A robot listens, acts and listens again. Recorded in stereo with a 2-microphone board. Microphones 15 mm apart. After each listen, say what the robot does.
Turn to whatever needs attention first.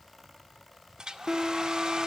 Turn 35° right.
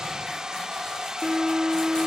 Turn 100° right.
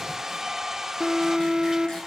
Turn 75° right.
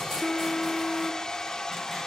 Turn 15° left.
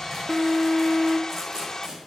Found it: an alarm, straight ahead, 1 to 2 m away.